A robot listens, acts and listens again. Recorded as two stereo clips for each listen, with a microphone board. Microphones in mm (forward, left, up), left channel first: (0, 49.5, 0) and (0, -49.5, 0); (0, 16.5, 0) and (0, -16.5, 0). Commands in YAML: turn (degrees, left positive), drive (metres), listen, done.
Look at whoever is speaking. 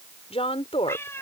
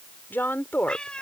turn: 90
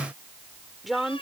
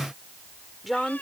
done: "Found it: a woman speaking, straight ahead."